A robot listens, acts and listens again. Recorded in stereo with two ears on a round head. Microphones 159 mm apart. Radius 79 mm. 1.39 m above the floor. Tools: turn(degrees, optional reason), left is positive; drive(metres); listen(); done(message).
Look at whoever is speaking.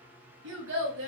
turn(degrees=-90)
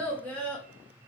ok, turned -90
turn(degrees=10, reason="So it is at 10° left.")
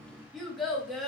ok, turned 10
done("Found it: a child speaking, straight ahead.")